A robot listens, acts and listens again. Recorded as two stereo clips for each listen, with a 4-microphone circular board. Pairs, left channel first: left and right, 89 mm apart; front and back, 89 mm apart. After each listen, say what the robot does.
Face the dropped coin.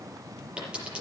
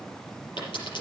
Turn 15° right.
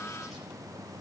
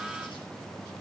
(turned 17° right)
I heard a dropped coin from this way, but can't make it out now.